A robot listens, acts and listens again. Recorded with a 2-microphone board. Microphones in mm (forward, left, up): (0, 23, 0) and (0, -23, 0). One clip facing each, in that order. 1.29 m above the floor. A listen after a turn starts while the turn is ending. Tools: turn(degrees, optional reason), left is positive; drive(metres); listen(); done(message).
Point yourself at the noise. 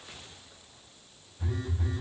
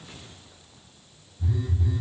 turn(degrees=55, reason="The phone buzzing: about 55° left or 125° left.")
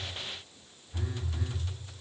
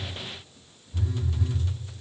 turn(degrees=50, reason="So it is at 50° left.")
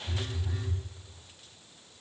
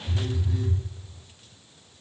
turn(degrees=10, reason="The phone buzzing is now 10° left.")
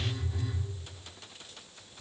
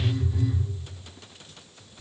done("Found it: a phone buzzing, straight ahead, under 1 m away.")